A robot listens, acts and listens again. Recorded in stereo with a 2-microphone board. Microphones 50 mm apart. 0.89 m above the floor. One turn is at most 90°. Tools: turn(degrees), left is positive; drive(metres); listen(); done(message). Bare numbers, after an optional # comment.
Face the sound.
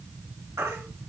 turn(-90)
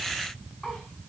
listen()
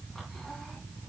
listen()
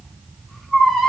# The baby crying is now 10° left.
turn(10)
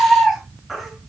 done("Facing the baby crying.")